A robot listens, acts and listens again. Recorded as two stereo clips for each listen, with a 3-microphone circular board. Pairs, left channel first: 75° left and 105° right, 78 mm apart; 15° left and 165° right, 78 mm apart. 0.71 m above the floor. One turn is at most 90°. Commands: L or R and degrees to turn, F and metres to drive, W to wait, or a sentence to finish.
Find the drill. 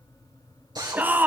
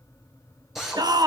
R80
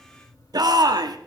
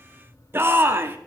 W
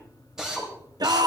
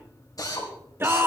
R25
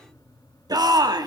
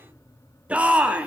W
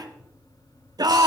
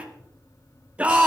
W
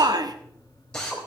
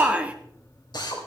Facing the drill, 2 to 4 m away.